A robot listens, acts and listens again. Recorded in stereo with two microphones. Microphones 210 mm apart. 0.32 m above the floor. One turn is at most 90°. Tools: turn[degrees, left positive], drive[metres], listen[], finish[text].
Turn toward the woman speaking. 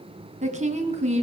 Thought: The woman speaking: about 30° right or 150° right.
Action: turn[-30]
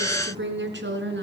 Thought: So it is at 120° right.
Action: turn[-90]
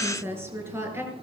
Thought: The woman speaking is now 10° right.
Action: turn[-10]
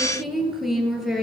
Action: finish[Facing the woman speaking.]